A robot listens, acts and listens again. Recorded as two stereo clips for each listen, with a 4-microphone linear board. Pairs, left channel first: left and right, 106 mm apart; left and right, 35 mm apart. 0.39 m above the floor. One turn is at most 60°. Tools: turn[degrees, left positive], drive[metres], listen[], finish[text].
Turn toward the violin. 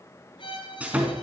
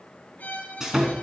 Thought: The violin: about 50° left or 130° left.
Action: turn[50]
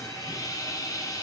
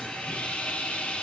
Action: listen[]
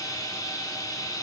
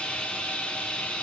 Action: listen[]
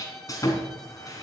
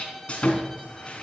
Action: finish[Facing the violin, 2 to 4 m away.]